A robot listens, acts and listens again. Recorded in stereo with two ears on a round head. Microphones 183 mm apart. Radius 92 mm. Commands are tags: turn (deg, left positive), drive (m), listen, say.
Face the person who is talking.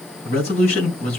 <turn deg="35"/>
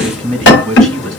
<say>Facing the man speaking.</say>